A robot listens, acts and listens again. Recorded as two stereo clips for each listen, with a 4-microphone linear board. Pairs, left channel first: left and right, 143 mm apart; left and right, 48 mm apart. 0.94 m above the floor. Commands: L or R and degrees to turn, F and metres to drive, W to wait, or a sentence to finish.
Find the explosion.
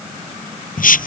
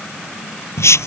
W
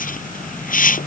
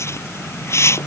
W
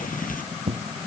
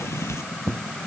R45
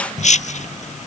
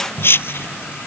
W
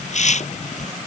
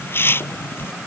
I heard an explosion, but can't make it out now. It was about straight ahead or 90° right.